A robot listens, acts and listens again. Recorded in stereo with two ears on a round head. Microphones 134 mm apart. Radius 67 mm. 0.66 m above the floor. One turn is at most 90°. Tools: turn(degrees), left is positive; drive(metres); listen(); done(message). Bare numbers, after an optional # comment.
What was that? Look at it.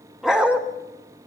turn(-30)
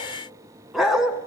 turn(-30)
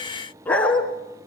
# So it is at 10° left.
turn(10)
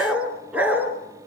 # The dog barking is now 10° right.
turn(-10)
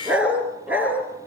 # The dog barking is now 10° right.
turn(-10)
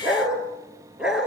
done("Found it: a dog barking, straight ahead.")